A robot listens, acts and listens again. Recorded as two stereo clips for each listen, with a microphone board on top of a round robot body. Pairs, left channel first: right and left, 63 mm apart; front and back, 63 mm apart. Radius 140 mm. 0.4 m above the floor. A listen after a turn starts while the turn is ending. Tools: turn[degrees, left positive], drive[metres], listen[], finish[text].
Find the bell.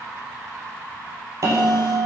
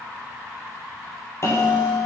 Thought: The bell: 50° left.
Action: turn[50]
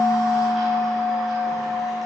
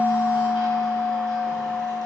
Action: finish[Found it: a bell, straight ahead.]